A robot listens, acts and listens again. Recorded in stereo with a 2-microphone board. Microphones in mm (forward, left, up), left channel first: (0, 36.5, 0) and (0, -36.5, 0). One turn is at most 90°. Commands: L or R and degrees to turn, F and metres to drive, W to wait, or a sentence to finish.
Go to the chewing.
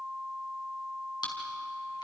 L90
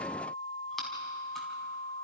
W
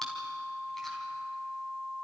W
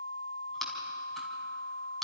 F1.0
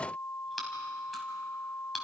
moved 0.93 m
F1.0
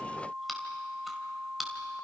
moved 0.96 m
F1.0
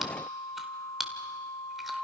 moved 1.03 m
F1.0
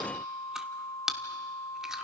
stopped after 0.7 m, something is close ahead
R10
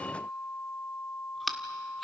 I am next to the chewing.